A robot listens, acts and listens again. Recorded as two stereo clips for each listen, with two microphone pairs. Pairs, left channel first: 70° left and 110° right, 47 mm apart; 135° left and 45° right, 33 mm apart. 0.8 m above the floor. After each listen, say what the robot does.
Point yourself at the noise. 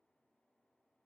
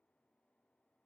Keep listening.
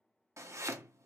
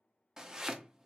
Turn 115° right.
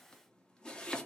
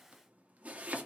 Facing the chopping, under 1 m away.